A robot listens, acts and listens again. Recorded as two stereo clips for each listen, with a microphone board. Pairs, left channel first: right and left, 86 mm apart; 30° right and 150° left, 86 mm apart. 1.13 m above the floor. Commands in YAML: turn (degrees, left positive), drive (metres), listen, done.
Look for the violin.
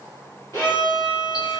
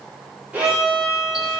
turn: -135
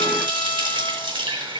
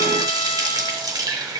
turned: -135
listen: true
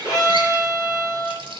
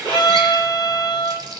turn: -35
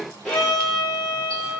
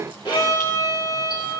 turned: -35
done: "Found it: a violin, straight ahead."